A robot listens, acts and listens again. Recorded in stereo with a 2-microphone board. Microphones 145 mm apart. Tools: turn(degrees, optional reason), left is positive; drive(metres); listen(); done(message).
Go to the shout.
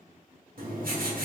listen()
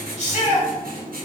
turn(degrees=50, reason="The shout: about 50° left or 130° left.")
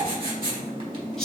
drive(metres=1.0)
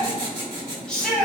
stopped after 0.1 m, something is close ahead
done("Blocked. The shout is further on, straight ahead.")